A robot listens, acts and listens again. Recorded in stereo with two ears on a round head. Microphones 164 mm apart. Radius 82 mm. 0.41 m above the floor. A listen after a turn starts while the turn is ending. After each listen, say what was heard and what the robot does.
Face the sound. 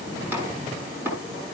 Turn 30° right.
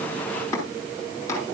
So it is at 15° left. Turn 15° left.
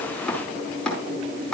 Facing the chopping.